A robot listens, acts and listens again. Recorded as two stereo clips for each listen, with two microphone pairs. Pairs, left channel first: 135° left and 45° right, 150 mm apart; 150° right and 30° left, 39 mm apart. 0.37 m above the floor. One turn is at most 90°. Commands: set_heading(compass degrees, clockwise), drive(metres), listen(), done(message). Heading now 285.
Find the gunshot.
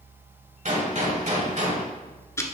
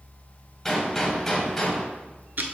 set_heading(355)
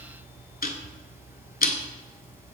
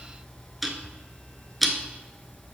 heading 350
done("I heard a gunshot from this way, but can't make it out now.")